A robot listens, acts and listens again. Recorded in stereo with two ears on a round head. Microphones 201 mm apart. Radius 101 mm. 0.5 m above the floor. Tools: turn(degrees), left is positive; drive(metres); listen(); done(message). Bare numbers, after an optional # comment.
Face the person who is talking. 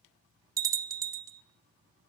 listen()
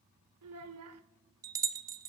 # The child speaking: about 75° right or 105° right.
turn(-75)
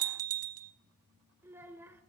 # So it is at 10° right.
turn(-10)
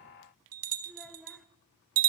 done("Facing the child speaking.")